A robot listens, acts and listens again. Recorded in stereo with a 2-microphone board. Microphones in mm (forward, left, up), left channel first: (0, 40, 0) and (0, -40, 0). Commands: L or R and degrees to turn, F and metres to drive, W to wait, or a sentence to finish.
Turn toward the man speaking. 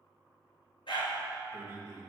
R35
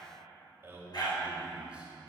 R25
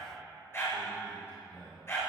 L35
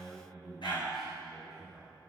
Found it: a man speaking, straight ahead, 1 to 2 m away.